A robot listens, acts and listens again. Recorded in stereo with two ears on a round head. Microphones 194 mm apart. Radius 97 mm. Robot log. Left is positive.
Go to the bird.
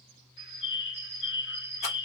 note: The bird: about 55° left or 125° left.
cmd yaw +55
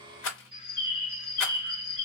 note: So it is at 35° left.
cmd yaw +35
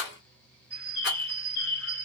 note: The bird is now 10° left.
cmd yaw +10
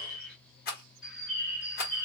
cmd fwd 1.0
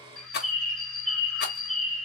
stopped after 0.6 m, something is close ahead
end: I am next to the bird.